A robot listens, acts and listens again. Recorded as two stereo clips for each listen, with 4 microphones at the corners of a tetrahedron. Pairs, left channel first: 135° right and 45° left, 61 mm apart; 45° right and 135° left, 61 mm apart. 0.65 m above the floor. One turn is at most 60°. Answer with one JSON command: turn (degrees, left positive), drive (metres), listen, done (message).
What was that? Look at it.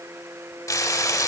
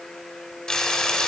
{"turn": -60}
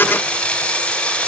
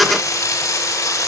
{"turn": -60}
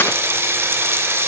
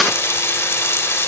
{"done": "Facing the frying."}